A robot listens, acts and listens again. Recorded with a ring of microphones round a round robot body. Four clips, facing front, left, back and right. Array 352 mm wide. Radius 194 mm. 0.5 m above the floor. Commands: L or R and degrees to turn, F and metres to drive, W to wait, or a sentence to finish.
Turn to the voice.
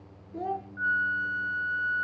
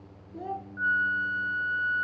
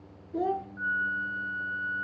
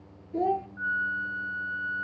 R125
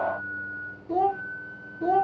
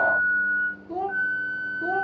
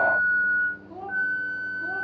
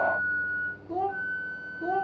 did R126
Found it: a child speaking, straight ahead, under 1 m away.